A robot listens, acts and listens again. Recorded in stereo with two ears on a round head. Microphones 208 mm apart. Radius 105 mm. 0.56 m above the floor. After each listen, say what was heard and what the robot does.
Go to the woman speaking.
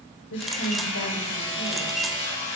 The woman speaking: about 55° left or 125° left. Turn 55° left.
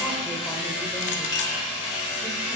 Keep listening.
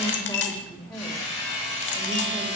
So it is at 10° left. Turn 10° left.
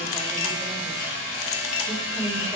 Drive 1.0 m forward.
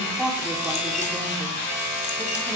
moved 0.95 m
Drive 1.0 m forward.
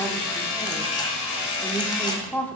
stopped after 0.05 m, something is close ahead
The woman speaking is now 10° left. Turn 10° left.
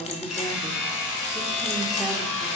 Arrived at the woman speaking, straight ahead.